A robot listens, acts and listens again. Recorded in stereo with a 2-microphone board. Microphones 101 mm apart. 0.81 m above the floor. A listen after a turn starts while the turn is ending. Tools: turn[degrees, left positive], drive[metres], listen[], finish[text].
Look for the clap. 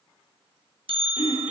Action: listen[]
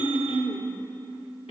Action: listen[]
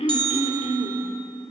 Action: finish[I can't make out a clap to turn to.]